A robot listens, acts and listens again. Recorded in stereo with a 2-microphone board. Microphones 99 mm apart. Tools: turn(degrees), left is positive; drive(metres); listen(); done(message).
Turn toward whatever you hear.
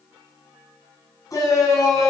turn(degrees=35)
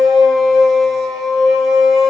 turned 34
done("Facing the shout.")